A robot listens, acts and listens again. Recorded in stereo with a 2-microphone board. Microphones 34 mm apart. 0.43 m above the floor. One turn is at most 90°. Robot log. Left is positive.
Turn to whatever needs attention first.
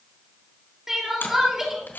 cmd yaw -30
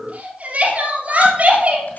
note: So it is at 140° right.
cmd yaw -90
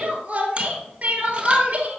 note: The crying is now 45° right.
cmd yaw -45
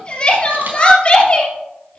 note: The crying is now 30° left.
cmd yaw +30
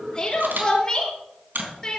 note: The crying is now 20° left.
cmd yaw +20
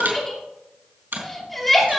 end: Facing the crying, 2 to 4 m away.